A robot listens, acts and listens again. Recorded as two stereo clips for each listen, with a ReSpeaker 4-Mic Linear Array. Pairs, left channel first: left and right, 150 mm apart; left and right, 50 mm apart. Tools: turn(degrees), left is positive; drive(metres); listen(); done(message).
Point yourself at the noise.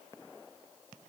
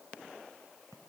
listen()
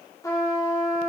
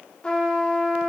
turn(degrees=20)
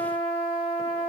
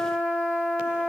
turn(degrees=140)
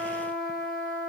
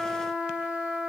turn(degrees=-30)
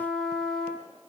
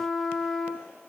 done("Found it: a trumpet, straight ahead, 1 to 2 m away.")